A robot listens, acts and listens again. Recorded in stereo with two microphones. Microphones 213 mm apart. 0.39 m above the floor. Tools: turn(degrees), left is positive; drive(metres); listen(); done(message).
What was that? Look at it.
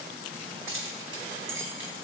turn(degrees=-70)
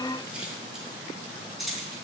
done("Found it: keys jangling, straight ahead.")